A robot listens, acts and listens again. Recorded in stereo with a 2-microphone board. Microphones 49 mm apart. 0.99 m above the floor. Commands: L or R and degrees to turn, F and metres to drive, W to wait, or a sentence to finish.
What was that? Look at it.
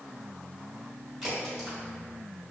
R30
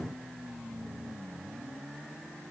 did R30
W
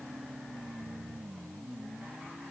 I heard a crack, but can't make it out now. It was about 25° left or 145° right.